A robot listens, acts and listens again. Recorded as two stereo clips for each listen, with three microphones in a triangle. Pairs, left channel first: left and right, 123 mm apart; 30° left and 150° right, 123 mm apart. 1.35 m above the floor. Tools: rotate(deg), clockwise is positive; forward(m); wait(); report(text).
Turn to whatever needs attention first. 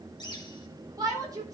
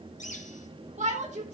rotate(150)
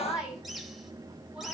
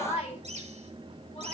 report("Facing the shout.")